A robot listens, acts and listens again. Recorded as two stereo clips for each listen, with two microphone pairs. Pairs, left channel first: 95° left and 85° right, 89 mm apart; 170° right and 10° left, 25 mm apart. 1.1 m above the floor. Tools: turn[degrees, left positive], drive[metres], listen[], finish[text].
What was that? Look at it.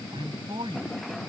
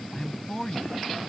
Thought: The man speaking: 105° right.
Action: turn[-105]
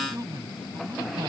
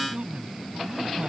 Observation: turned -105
Thought: The man speaking is now 35° right.
Action: turn[-35]
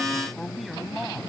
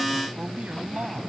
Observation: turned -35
Action: finish[Facing the man speaking.]